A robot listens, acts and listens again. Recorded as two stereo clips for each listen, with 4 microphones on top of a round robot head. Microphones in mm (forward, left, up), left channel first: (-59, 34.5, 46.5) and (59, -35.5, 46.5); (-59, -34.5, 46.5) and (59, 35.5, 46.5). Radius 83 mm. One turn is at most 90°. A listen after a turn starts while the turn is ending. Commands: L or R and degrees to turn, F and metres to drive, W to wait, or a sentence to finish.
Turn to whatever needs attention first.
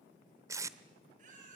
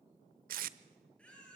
R65
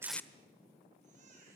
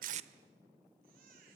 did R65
Found it: a baby crying, straight ahead.